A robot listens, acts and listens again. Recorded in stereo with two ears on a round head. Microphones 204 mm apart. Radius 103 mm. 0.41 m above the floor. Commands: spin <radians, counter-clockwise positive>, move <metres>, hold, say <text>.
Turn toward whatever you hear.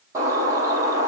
spin -0.52
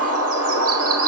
spin -2.44
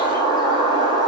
spin -0.35
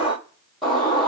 say Facing the bird.